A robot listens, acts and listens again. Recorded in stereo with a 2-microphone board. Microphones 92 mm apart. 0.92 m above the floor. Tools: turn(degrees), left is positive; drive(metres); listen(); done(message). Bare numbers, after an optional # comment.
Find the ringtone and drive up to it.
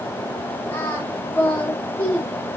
listen()
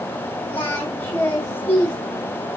listen()
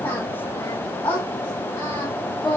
done("I can't make out a ringtone, only singing.")